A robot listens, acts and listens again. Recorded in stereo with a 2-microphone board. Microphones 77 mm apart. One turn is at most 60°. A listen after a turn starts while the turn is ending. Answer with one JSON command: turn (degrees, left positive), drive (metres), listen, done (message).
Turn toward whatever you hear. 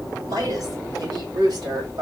{"turn": -60}
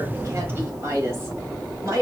{"turn": -45}
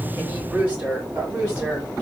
{"turn": -25}
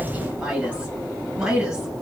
{"turn": -10}
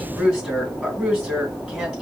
{"done": "Found it: a woman speaking, straight ahead, 2 to 4 m away."}